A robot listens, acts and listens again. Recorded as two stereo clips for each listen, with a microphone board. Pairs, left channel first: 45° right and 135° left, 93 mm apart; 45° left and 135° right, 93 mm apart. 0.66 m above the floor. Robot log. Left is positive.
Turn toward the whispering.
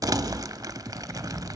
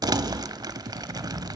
cmd idle
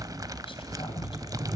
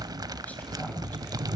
note: The whispering: 30° right.
cmd yaw -30
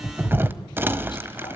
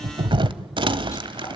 cmd idle
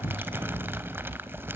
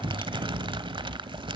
note: The whispering is now 10° right.
cmd yaw -10
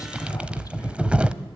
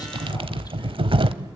cmd idle
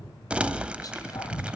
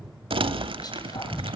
end: Facing the whispering.